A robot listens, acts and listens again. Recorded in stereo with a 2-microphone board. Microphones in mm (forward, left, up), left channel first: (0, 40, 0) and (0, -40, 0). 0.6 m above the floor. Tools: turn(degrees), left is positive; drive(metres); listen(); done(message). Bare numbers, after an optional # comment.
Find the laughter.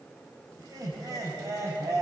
# The laughter: about 35° right or 145° right.
turn(-35)
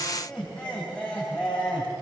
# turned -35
# So it is at 15° left.
turn(15)
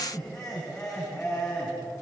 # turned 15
# The laughter is now 15° left.
turn(15)
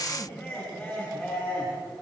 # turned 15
done("Facing the laughter.")